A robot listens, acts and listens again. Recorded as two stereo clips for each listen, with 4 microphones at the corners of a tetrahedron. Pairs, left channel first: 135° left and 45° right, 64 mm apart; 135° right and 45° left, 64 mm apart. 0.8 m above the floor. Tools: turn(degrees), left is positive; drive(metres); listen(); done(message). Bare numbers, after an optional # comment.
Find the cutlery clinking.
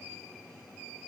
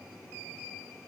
listen()
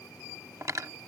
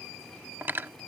# The cutlery clinking: 15° right.
turn(-15)
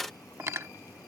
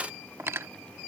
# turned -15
done("Found it: cutlery clinking, straight ahead.")